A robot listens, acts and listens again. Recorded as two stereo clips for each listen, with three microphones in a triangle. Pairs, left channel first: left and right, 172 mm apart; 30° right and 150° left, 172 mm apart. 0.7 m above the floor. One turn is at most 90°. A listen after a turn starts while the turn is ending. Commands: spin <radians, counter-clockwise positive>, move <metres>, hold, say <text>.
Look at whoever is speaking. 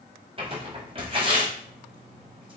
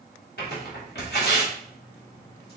hold
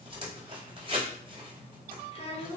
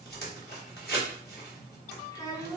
spin 0.70
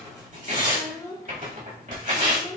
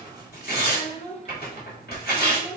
spin 0.35
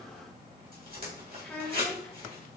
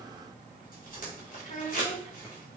say Facing the child speaking, 1 to 2 m away.